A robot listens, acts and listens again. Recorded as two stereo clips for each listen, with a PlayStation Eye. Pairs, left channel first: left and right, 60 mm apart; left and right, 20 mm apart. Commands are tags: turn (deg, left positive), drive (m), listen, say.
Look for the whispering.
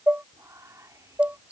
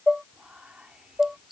<turn deg="-65"/>
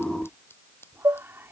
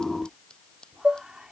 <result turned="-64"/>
<turn deg="-45"/>
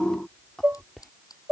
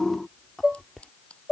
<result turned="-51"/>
<say>Facing the whispering.</say>